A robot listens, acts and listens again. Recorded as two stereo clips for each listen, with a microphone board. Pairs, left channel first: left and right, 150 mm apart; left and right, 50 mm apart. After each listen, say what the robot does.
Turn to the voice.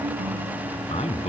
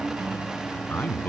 Turn 45° left.
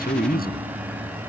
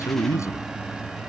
Turn 90° left.
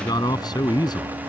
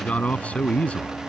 Turn 25° left.
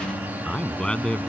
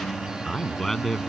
Found it: a man speaking, straight ahead.